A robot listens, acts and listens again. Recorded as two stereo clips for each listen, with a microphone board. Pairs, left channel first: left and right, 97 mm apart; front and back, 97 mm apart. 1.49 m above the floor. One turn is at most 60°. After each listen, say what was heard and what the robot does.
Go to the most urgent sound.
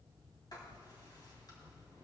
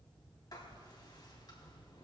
Keep listening.
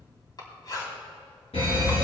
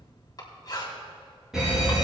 The fire alarm: 95° left. Turn 60° left.
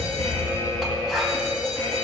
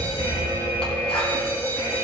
The fire alarm is now 50° left. Turn 50° left.
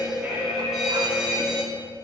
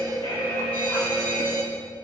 Drive 1.0 m forward.
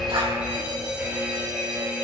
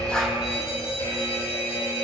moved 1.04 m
The fire alarm is now 10° right. Turn 10° right.
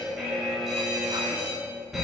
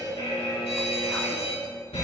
Drive 1.0 m forward.
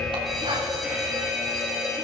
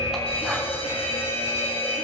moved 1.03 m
Drive 1.0 m forward.
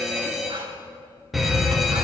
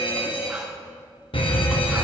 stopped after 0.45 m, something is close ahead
Arrived at the fire alarm, straight ahead.